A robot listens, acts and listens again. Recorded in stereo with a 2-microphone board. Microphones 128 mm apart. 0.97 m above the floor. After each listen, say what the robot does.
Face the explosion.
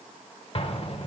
Turn 50° left.
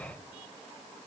Keep listening.
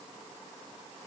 I heard an explosion, but can't make it out now. It was about straight ahead or 80° left.